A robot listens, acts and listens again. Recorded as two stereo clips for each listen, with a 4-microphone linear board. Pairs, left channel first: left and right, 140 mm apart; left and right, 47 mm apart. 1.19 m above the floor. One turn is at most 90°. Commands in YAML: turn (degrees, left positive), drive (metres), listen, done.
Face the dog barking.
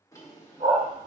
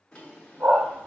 turn: -60
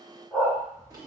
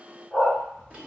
done: "Facing the dog barking, 2 to 4 m away."